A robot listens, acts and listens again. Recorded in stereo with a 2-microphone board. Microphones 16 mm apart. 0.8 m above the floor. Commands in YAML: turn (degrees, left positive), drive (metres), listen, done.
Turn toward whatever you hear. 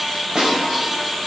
turn: -60
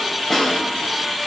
done: "Found it: a snare drum, straight ahead."